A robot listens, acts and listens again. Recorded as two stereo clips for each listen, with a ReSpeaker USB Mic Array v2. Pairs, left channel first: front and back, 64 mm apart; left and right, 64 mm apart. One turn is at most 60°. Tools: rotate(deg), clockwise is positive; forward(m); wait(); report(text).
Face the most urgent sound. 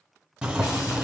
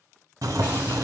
wait()
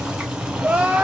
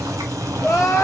rotate(-60)
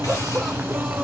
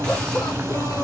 rotate(-60)
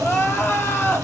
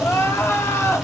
rotate(-50)
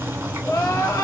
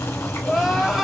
report("Facing the crying.")